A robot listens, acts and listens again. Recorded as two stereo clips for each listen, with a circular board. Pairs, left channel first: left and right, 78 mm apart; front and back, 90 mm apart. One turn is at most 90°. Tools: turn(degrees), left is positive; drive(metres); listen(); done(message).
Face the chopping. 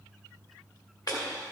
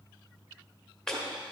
turn(degrees=80)
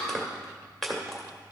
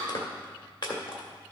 done("Facing the chopping.")